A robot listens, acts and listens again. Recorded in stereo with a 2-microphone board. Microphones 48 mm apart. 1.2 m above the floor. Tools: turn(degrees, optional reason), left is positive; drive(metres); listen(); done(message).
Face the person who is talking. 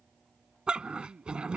turn(degrees=-70, reason="The man speaking: about 70° right or 110° right.")
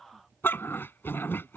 listen()
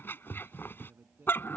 turn(degrees=-45, reason="So it is at 45° right.")
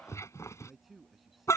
done("Found it: a man speaking, straight ahead.")